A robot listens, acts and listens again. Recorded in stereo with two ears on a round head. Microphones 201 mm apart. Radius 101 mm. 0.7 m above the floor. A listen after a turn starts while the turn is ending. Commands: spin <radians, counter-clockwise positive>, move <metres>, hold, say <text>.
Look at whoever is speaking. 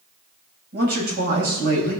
spin -0.79
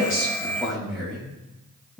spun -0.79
say Facing the man speaking.